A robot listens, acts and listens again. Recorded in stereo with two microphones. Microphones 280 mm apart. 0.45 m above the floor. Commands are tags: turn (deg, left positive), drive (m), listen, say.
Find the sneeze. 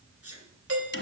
<turn deg="-60"/>
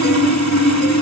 <listen/>
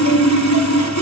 <say>I heard a sneeze, but can't make it out now. It was about straight ahead or 60° right.</say>